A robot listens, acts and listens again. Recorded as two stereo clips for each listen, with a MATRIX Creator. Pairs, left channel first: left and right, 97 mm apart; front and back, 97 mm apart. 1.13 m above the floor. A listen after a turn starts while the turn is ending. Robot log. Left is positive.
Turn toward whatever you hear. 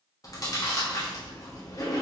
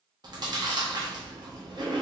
note: The chewing: 140° left.
cmd yaw +140
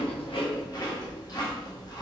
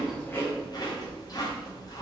note: The chewing is now 45° left.
cmd yaw +45
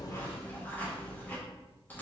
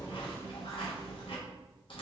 note: The chewing is now 20° left.
cmd yaw +20
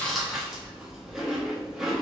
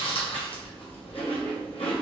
end: Found it: chewing, straight ahead.